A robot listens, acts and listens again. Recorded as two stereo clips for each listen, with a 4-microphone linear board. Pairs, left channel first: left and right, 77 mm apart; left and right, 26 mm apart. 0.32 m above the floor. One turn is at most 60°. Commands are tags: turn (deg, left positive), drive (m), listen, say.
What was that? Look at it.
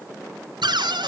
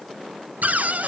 <turn deg="-60"/>
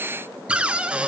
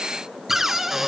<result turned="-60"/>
<turn deg="-15"/>
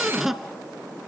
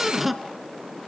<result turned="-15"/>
<say>Found it: a cupboard door, straight ahead, 1 to 2 m away.</say>